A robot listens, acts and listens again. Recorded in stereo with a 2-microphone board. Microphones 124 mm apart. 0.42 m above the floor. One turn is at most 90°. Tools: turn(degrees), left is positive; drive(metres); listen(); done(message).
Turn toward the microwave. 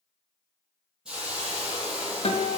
listen()
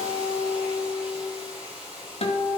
listen()
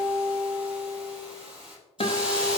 done("I can't make out a microwave, only a hiss and a guitar.")